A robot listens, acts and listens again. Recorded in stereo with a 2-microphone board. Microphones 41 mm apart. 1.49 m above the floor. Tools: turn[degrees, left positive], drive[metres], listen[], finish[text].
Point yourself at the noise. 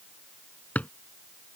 Thought: The drawer: about 40° left or 140° left.
Action: turn[40]
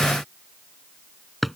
Action: finish[Facing the drawer.]